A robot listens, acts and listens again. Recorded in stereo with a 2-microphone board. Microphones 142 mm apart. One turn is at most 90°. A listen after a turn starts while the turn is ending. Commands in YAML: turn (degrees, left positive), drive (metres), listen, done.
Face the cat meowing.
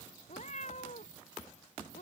turn: 55
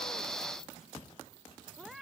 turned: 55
done: "Facing the cat meowing."